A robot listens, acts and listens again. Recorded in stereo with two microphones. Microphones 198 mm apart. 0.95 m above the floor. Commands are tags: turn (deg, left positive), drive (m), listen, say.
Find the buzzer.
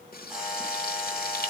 <turn deg="30"/>
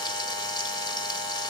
<turn deg="-35"/>
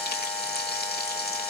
<say>Facing the buzzer.</say>